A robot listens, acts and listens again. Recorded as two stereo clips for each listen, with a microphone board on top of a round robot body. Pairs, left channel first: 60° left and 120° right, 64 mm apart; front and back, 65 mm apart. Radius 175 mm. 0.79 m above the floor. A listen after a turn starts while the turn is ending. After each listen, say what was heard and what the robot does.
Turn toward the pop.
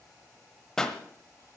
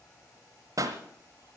The pop: 140° left. Turn 140° left.
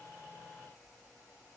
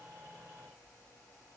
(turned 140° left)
I heard a pop from this way, but can't make it out now.